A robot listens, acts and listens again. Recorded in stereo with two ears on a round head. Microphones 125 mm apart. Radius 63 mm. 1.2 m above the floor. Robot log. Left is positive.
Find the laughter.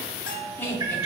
cmd yaw +30
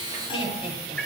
note: So it is at 145° left.
cmd yaw +145
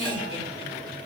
note: The laughter is now 40° left.
cmd yaw +40
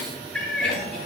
cmd idle
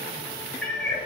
cmd idle
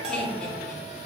end: Facing where the laughter came from. I can't hear it now.